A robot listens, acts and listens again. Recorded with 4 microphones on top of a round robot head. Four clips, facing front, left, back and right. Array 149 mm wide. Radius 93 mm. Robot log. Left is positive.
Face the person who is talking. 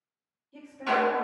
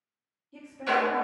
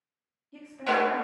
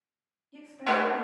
note: The woman speaking: 165° right.
cmd yaw -165
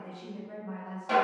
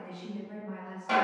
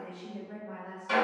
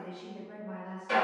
note: The woman speaking is now 20° right.
cmd yaw -20
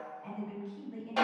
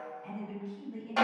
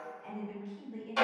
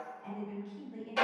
end: Facing the woman speaking.